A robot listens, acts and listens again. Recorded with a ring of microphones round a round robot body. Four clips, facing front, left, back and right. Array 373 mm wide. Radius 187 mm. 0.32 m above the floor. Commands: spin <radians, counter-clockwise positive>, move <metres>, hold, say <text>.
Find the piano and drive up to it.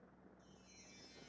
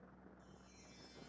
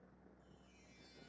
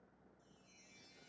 hold
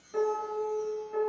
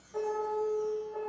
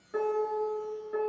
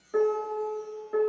spin -1.75
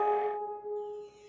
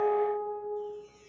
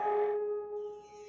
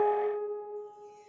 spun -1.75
spin -0.61
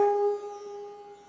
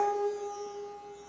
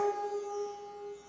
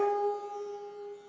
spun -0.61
spin -0.17
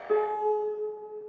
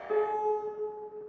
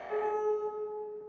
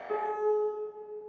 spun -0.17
move 1.0
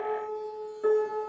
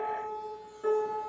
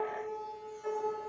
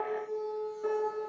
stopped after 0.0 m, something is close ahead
say Something is in my way. I am facing the piano but have not reached it.